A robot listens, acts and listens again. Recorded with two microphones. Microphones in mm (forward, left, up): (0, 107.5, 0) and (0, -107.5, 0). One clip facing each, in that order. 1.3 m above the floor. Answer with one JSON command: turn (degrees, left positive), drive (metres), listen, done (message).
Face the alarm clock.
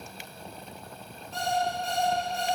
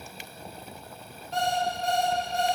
{"turn": -70}
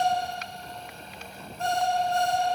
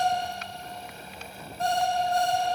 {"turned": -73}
{"turn": -35}
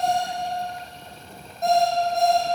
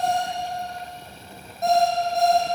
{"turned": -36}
{"done": "Found it: an alarm clock, straight ahead."}